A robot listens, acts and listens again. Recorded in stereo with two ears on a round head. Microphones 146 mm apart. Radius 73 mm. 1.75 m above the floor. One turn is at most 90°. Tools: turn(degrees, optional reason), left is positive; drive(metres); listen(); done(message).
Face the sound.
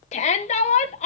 turn(degrees=40, reason="The shout: about 40° left or 140° left.")
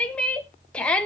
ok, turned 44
turn(degrees=10, reason="So it is at 10° left.")
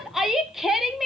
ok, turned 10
done("Found it: a shout, straight ahead.")